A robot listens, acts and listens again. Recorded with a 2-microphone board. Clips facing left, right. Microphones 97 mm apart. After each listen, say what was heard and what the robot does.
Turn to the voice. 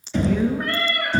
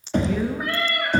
Turn 30° right.
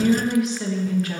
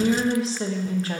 So it is at 145° right. Turn 145° right.
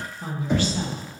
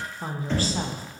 The woman speaking is now 40° right. Turn 40° right.
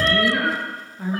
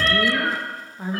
The woman speaking is now 20° right. Turn 20° right.
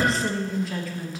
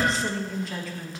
Found it: a woman speaking, straight ahead, 1 to 2 m away.